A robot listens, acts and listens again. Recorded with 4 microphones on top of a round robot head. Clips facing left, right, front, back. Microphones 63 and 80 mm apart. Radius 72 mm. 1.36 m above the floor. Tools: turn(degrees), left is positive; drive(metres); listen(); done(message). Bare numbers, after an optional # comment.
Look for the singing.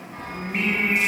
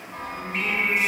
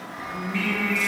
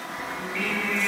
# The singing: 25° left.
turn(25)
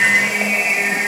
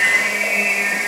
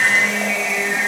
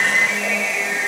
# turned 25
done("Found it: singing, straight ahead.")